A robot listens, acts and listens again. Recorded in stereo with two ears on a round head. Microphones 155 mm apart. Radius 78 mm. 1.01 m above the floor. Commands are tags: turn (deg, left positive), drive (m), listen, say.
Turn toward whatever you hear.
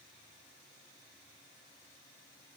<listen/>
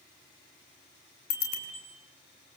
<turn deg="60"/>
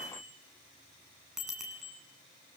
<say>Found it: a bicycle bell, straight ahead, over 4 m away.</say>